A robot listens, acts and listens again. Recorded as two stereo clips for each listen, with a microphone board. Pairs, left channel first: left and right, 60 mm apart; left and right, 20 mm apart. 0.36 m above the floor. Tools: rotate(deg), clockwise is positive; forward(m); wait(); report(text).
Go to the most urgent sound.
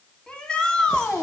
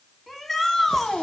rotate(-15)
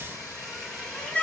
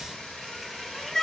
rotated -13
rotate(-150)
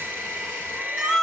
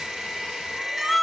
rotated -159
rotate(10)
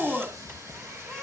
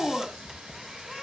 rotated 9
forward(1.0)
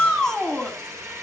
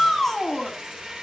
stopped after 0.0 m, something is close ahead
rotate(-10)
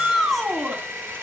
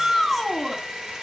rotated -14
report("Blocked. The shout is further on, straight ahead.")